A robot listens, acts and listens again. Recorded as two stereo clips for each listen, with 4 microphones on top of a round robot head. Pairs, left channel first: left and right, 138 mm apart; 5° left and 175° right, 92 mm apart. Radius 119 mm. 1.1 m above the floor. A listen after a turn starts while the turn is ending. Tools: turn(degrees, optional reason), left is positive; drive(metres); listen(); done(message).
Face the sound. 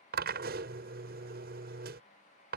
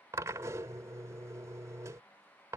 turn(degrees=-105, reason="The drill: 105° right.")
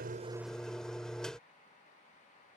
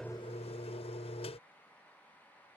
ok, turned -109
done("Facing the drill.")